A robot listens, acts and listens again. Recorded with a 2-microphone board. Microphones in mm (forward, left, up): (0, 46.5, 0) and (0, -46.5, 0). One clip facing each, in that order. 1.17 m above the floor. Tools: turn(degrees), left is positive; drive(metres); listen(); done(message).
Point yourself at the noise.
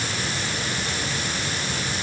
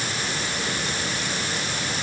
listen()
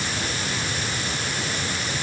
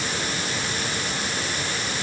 listen()
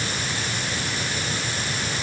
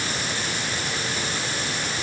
done("I can't make out anything to turn to.")